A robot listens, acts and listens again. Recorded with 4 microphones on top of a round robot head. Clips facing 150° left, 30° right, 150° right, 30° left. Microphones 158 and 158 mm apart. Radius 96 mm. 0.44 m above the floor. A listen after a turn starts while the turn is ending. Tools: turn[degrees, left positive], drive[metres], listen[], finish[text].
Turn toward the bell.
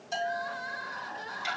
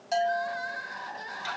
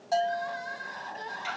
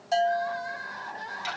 Thought: The bell: 35° right.
Action: turn[-35]
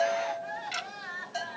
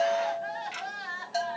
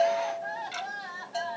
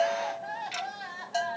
Thought: The bell is now 10° right.
Action: turn[-10]
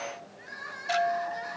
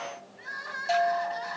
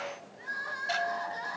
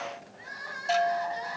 Action: finish[Facing the bell.]